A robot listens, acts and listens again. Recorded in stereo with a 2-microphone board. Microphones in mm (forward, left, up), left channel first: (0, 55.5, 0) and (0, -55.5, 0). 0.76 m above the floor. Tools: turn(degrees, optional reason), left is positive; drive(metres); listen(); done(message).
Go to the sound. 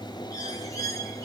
turn(degrees=30, reason="The bird: about 30° left or 150° left.")
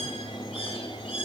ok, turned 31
turn(degrees=120, reason="So it is at 120° left.")
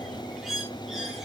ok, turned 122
drive(metres=1.0)
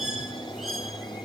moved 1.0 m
drive(metres=1.0)
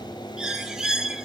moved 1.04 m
drive(metres=1.0)
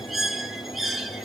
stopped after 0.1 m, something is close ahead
done("I am next to the bird.")